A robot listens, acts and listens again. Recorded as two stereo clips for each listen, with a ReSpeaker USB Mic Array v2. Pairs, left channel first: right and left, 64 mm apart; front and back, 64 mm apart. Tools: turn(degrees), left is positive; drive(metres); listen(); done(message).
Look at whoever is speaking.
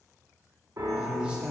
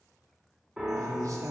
turn(degrees=165)
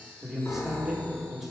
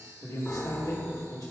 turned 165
turn(degrees=10)
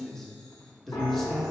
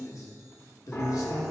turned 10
done("Facing the man speaking.")